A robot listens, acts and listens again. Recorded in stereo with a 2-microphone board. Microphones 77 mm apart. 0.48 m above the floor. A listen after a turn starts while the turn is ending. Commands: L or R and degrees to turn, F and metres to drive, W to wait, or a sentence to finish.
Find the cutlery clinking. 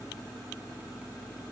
W
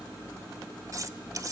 R45
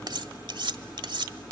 R90
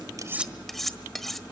Found it: cutlery clinking, straight ahead.